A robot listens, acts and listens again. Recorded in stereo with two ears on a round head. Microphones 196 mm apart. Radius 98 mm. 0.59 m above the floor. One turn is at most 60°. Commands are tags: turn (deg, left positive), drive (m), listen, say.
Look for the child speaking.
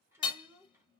<turn deg="-30"/>
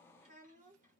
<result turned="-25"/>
<turn deg="-60"/>
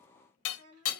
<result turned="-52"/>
<turn deg="-60"/>
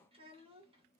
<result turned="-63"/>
<turn deg="-30"/>
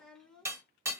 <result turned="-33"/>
<say>Found it: a child speaking, straight ahead.</say>